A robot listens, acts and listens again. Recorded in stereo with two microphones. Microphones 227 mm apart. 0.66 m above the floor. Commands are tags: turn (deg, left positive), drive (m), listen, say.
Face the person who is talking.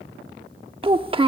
<turn deg="-25"/>
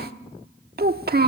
<turn deg="-125"/>
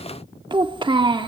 <turn deg="-25"/>
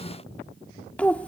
<say>Found it: a child speaking, straight ahead, 1 to 2 m away.</say>